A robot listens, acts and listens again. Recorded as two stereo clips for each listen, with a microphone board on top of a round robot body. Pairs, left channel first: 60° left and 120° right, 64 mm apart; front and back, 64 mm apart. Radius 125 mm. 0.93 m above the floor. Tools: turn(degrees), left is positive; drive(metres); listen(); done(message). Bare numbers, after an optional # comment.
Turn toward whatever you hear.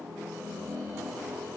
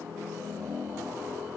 listen()
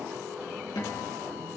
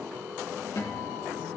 # The guitar: 40° left.
turn(40)
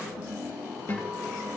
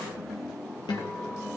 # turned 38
done("Facing the guitar, over 4 m away.")